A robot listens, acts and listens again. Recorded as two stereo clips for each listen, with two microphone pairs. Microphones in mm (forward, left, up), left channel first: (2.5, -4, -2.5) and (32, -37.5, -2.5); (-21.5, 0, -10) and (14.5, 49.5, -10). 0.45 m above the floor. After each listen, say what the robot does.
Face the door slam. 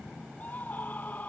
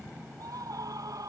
Keep listening.
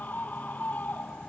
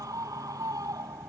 Keep listening.
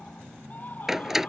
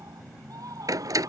Turn 30° left.
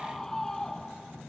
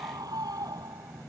Facing where the door slam came from. I can't hear it now.